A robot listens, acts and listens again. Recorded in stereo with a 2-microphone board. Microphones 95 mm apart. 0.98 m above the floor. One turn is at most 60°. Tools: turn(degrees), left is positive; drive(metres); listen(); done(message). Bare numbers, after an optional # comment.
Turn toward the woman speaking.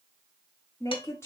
# The woman speaking: about 30° left or 150° left.
turn(30)
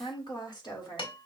# So it is at 130° left.
turn(60)
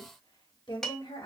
# The woman speaking is now 70° left.
turn(60)
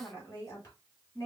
# The woman speaking is now 30° left.
turn(30)
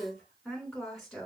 done("Facing the woman speaking.")